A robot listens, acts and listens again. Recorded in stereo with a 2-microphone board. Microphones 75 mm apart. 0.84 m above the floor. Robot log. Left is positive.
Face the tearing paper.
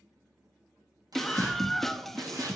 note: The tearing paper: about 60° right or 120° right.
cmd yaw -60
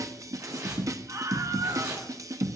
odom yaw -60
note: So it is at 60° right.
cmd yaw -60
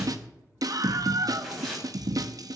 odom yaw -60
end: Facing the tearing paper.